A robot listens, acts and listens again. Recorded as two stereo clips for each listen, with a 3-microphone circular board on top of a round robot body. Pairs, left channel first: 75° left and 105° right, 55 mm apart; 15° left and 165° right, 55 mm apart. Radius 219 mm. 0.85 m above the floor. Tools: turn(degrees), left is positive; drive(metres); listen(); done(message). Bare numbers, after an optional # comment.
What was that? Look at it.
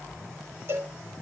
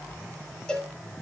# The cowbell: 60° right.
turn(-60)
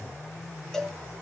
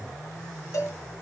# The cowbell is now 10° right.
turn(-10)
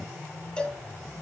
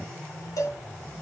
done("Facing the cowbell, 2 to 4 m away.")